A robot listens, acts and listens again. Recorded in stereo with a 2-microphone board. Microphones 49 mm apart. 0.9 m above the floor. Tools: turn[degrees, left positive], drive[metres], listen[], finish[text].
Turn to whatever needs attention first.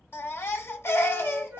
Thought: The baby crying: about 55° left or 125° left.
Action: turn[55]
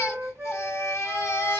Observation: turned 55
Thought: So it is at 65° left.
Action: turn[65]
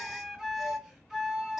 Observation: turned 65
Action: listen[]
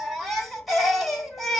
Action: finish[Facing the baby crying, 1 to 2 m away.]